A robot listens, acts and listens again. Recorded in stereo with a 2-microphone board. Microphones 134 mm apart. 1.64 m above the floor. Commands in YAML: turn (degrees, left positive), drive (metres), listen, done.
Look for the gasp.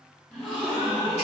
turn: 30
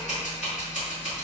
listen: true
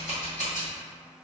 done: "I heard a gasp, but can't make it out now. It was about 30° right or 150° left."